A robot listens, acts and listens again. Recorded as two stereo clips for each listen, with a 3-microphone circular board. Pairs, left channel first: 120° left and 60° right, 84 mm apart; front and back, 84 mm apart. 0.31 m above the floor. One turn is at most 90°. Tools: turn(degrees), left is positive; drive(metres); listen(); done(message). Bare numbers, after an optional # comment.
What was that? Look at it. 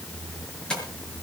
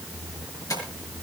# The tapping: 45° left.
turn(45)
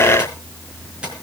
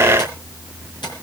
# The tapping is now 15° left.
turn(15)
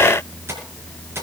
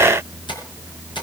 done("Facing the tapping, over 4 m away.")